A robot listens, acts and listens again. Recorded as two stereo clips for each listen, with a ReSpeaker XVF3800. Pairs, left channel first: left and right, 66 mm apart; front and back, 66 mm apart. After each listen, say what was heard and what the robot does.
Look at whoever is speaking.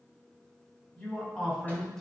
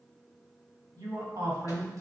The man speaking: 165° left. Turn 165° left.
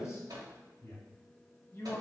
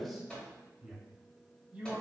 The man speaking is now 120° left. Turn 120° left.
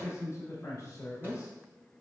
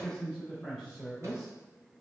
The man speaking is now 85° left. Turn 85° left.
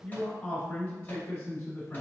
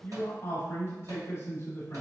The man speaking is now 25° left. Turn 25° left.
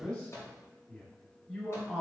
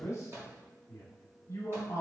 Facing the man speaking.